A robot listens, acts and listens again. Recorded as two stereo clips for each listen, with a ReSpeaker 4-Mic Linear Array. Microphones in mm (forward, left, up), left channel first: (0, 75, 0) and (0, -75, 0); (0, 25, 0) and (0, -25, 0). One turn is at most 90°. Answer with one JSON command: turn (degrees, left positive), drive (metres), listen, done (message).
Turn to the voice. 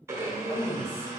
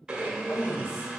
{"turn": 65}
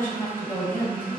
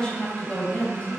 {"turn": 20}
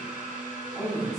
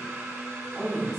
{"done": "Found it: a woman speaking, straight ahead."}